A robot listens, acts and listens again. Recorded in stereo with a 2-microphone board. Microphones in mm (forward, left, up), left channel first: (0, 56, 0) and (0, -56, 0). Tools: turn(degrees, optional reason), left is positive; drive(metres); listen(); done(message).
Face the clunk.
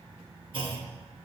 turn(degrees=-50, reason="The clunk: about 50° right or 130° right.")
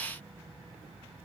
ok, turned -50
listen()
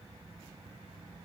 done("I heard a clunk, but can't make it out now. It was about straight ahead or 80° right.")